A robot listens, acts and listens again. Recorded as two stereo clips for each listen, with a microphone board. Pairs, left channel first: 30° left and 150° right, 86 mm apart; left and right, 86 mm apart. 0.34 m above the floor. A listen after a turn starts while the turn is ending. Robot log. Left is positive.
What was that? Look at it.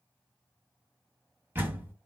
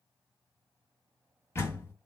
note: The door slam: 150° left.
cmd yaw +150
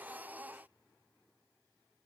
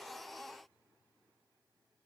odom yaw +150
end: Facing where the door slam came from. I can't hear it now.